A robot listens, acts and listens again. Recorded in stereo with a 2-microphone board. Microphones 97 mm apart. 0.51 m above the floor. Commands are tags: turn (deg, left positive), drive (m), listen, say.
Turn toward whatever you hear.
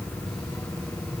<listen/>
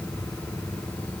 <listen/>
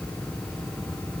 <say>I can't make out anything to turn to.</say>